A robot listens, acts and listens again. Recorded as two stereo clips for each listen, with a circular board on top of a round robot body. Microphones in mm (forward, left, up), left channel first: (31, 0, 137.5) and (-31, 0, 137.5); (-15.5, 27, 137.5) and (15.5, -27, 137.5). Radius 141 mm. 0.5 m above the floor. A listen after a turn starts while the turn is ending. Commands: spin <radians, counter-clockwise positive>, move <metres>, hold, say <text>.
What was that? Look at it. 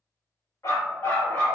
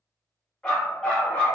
spin 0.96
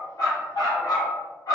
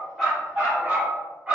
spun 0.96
spin 0.17
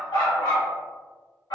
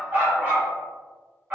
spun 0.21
spin 0.17
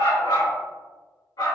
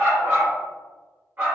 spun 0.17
say Found it: a dog barking, straight ahead.